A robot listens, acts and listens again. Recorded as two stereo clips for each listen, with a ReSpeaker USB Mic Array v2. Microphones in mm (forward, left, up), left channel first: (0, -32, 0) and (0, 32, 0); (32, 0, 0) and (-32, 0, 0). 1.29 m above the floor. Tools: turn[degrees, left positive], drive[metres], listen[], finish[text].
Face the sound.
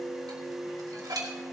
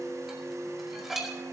Thought: The dishes clattering: 95° left.
Action: turn[95]
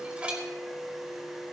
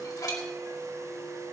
Thought: The dishes clattering is now 20° left.
Action: turn[20]
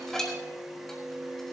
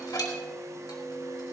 Action: finish[Facing the dishes clattering.]